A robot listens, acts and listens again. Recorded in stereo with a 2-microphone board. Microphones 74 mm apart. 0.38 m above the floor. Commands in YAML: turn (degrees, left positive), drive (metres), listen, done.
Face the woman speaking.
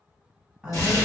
turn: -30
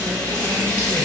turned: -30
listen: true
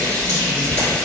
listen: true
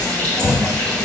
done: "I heard a woman speaking, but can't make it out now. It was about 20° left or 140° right."